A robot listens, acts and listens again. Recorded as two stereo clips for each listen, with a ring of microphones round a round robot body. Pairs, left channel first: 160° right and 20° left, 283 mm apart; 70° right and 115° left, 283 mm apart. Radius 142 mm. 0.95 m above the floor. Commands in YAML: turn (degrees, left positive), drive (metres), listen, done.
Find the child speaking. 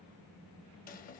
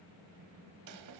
listen: true
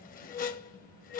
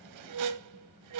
listen: true
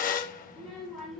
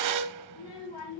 turn: -65
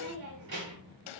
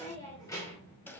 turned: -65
turn: 10
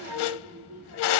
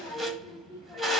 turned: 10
turn: 15
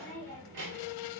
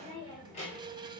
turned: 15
done: "Found it: a child speaking, straight ahead, 2 to 4 m away."